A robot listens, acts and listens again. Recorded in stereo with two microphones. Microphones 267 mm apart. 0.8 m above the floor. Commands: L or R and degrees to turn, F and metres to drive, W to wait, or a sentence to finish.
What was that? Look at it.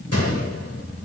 L60
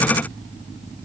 W
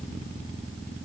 I heard a gunshot, but can't make it out now. It was about straight ahead or 60° left.